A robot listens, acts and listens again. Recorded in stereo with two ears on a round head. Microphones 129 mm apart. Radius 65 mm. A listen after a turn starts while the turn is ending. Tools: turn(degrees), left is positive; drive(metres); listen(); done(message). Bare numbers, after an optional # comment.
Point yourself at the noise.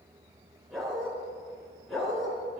turn(30)
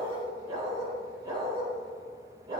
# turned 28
# So it is at 30° right.
turn(-30)
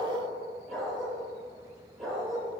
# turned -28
done("Found it: a dog barking, straight ahead, over 4 m away.")